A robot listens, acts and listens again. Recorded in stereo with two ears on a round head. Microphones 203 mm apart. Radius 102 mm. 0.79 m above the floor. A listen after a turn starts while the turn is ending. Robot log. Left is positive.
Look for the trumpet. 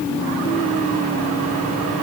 cmd idle
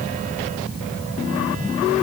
cmd idle
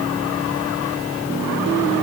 end: I can't make out a trumpet to turn to.